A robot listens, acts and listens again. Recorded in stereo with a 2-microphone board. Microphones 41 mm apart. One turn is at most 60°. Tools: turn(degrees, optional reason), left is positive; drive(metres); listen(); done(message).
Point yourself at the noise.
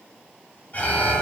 turn(degrees=45, reason="The alarm: about 45° left or 135° left.")
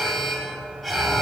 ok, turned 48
done("Found it: an alarm, straight ahead.")